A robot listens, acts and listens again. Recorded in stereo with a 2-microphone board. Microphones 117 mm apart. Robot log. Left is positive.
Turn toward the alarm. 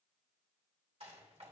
cmd idle
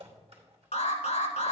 cmd yaw +90
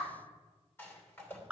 note: So it is at 10° right.
cmd yaw -10
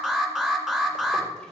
end: Facing the alarm, 1 to 2 m away.